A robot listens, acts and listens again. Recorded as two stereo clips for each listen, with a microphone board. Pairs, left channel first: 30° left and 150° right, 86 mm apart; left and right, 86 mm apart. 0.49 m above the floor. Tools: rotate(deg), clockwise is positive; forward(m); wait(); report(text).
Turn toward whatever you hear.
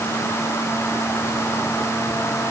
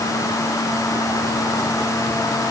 wait()
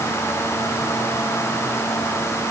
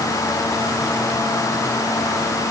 wait()
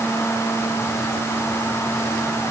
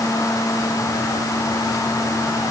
report("I can't make out anything to turn to.")